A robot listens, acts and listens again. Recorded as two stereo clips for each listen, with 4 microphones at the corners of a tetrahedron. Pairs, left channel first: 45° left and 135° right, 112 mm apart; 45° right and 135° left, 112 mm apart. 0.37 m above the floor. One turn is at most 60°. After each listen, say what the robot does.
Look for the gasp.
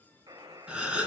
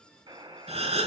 Turn 60° left.
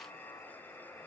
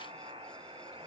Turn 60° left.
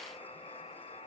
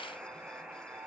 Turn 25° left.
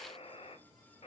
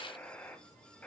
I heard a gasp from this way, but can't make it out now.